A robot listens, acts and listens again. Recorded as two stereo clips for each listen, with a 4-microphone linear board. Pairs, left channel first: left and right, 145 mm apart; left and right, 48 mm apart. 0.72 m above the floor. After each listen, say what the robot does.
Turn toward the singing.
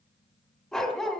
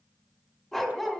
Keep listening.
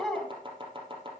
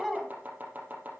Keep listening.
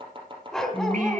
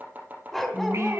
Turn 65° right.
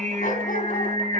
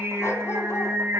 Turn 65° right.
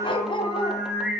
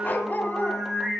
Found it: singing, straight ahead.